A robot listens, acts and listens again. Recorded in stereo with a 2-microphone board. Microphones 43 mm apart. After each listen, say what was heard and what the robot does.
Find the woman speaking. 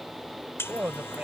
The woman speaking: about 35° right or 145° right. Turn 35° right.
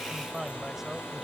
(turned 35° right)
Facing the woman speaking.